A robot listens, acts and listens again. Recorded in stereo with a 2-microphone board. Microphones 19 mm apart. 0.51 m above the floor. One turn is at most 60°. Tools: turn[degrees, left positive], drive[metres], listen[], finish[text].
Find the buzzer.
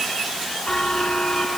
Thought: The buzzer: about 55° left or 125° left.
Action: turn[55]
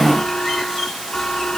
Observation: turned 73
Thought: So it is at 50° left.
Action: turn[50]
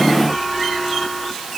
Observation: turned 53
Action: finish[Facing the buzzer.]